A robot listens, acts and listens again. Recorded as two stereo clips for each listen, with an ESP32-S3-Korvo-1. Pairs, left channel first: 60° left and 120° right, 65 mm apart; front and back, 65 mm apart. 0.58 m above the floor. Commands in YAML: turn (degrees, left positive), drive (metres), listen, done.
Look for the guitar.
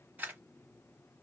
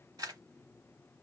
listen: true
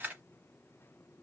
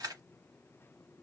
listen: true
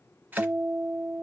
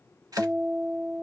turn: -135
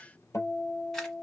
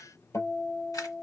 turn: 30
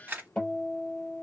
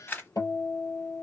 turn: -10
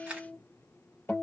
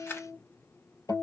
done: "Found it: a guitar, straight ahead."